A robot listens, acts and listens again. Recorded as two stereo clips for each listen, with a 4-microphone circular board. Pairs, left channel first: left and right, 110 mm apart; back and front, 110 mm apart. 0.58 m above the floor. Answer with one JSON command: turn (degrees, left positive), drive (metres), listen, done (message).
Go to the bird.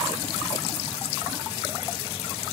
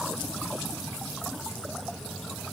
{"listen": true}
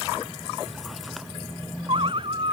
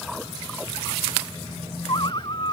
{"turn": -130}
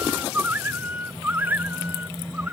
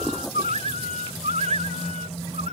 {"turn": -15}
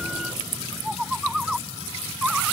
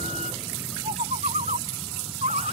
{"drive": 1.0}
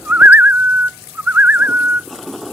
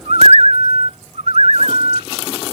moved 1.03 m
{"turn": -15}
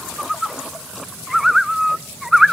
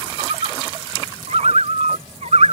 {"drive": 1.0}
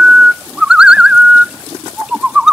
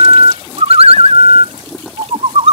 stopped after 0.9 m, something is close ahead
{"turn": -10}
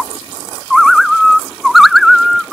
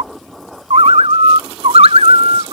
{"done": "I am next to the bird."}